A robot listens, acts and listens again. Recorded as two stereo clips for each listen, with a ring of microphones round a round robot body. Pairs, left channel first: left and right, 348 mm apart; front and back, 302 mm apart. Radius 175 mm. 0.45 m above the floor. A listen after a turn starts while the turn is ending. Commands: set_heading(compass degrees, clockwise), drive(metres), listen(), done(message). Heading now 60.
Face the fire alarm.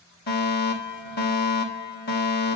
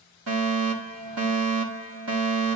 set_heading(270)
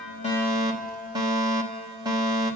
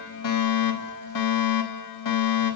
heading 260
set_heading(270)
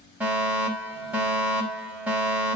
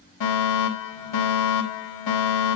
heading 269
done("Found it: a fire alarm, straight ahead, over 4 m away.")